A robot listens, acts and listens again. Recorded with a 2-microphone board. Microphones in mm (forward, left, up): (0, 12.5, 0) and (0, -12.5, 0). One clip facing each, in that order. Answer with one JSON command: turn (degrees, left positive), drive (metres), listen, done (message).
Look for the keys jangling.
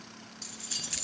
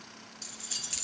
{"turn": 30}
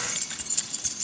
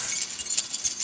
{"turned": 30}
{"turn": -15}
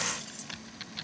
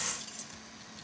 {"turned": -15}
{"listen": true}
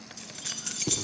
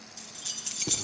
{"done": "Facing the keys jangling, over 4 m away."}